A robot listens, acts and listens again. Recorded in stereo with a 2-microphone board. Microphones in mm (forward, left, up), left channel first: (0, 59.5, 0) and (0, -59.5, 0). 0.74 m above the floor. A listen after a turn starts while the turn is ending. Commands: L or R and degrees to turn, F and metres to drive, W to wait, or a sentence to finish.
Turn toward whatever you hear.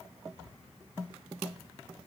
W
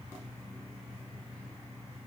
W
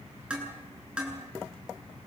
R30
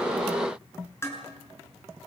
L20
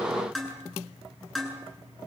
Facing the dishes clattering, over 4 m away.